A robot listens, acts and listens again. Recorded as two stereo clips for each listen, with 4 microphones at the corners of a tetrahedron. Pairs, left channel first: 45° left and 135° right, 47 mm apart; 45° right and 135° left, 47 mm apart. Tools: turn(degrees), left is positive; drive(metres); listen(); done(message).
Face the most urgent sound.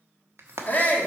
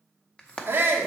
turn(degrees=95)
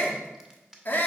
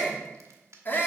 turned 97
done("Facing the shout.")